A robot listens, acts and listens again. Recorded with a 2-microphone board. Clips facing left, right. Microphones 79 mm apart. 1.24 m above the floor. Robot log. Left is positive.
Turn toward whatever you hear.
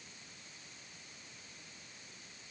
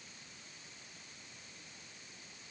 cmd idle
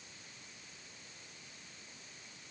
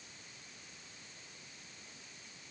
cmd idle
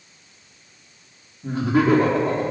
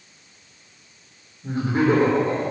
cmd yaw +90
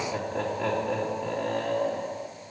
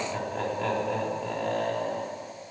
end: Found it: laughter, straight ahead.